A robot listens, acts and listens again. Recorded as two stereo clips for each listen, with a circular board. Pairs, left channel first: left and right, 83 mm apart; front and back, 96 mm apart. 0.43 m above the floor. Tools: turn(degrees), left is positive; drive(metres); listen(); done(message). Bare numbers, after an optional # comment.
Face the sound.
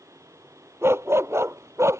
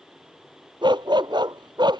# The dog barking: 145° right.
turn(-145)
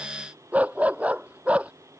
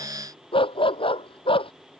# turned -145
# The dog barking is now 15° right.
turn(-15)
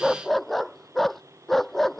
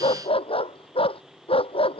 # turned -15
done("Found it: a dog barking, straight ahead.")